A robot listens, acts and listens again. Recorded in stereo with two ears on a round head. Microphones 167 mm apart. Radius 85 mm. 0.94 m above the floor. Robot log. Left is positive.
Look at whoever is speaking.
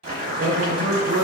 note: The man speaking: about 40° right or 140° right.
cmd yaw -40
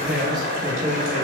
end: Facing the man speaking.